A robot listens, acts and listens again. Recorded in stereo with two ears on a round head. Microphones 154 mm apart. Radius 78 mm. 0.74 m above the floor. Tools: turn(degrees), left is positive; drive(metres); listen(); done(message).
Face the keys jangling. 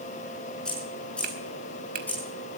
turn(degrees=30)
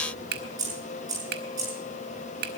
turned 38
turn(degrees=-20)
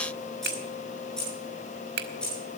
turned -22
done("Facing the keys jangling, over 4 m away.")